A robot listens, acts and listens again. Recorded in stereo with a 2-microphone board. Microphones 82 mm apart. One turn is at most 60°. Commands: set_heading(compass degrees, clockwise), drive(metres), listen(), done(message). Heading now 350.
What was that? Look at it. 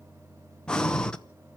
set_heading(320)
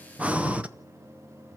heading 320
set_heading(335)
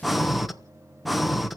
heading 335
done("Facing the breathing.")